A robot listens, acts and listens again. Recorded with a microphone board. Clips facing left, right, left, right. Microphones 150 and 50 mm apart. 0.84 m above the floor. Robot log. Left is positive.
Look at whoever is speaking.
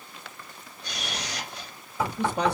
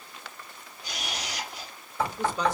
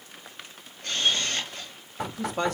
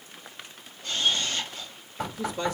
note: The man speaking: about 60° left or 120° left.
cmd yaw +60
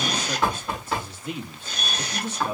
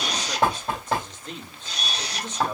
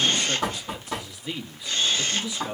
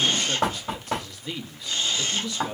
note: So it is at 10° left.
cmd yaw +10
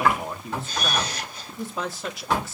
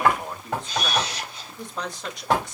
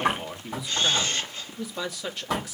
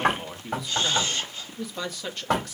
end: Facing the man speaking.